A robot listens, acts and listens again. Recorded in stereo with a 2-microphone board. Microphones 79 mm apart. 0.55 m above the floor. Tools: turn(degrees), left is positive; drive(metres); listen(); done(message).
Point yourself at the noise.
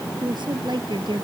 turn(degrees=-65)
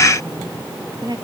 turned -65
turn(degrees=-60)
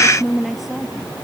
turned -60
done("Facing the woman speaking.")